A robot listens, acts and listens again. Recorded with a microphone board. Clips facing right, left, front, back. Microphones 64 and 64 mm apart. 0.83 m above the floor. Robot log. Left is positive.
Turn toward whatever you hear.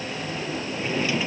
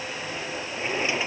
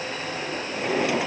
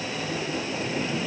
note: The drawer: 20° left.
cmd yaw +20
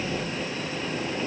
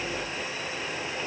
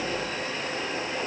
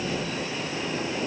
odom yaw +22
cmd idle
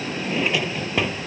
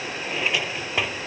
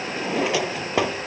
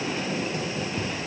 end: Found it: a drawer, straight ahead.